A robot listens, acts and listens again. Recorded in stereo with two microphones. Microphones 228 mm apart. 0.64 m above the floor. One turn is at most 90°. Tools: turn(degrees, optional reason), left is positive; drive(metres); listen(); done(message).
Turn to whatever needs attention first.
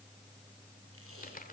listen()
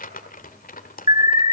turn(degrees=-20, reason="The alarm: about 20° right or 160° right.")
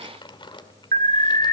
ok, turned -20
turn(degrees=-90, reason="So it is at 140° right.")
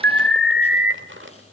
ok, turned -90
turn(degrees=-60, reason="The alarm is now 60° right.")
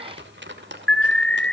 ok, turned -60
done("Facing the alarm, 1 to 2 m away.")